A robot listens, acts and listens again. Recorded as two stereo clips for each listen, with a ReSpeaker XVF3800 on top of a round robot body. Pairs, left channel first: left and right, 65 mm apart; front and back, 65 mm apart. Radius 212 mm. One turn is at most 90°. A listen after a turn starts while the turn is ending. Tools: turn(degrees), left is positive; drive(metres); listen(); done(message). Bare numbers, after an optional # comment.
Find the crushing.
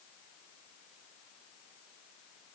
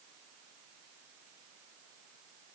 listen()
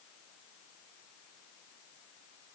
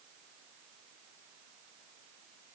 listen()
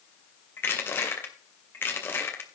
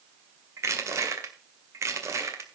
# The crushing: 145° left.
turn(90)
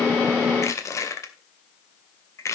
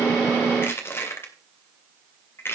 # The crushing is now 50° left.
turn(50)
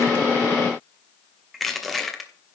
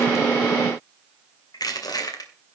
done("Facing the crushing, 2 to 4 m away.")